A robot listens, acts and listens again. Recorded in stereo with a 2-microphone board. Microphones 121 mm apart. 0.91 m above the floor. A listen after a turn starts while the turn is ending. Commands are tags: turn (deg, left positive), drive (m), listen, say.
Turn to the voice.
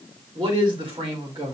<turn deg="-40"/>
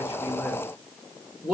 <say>Facing the man speaking.</say>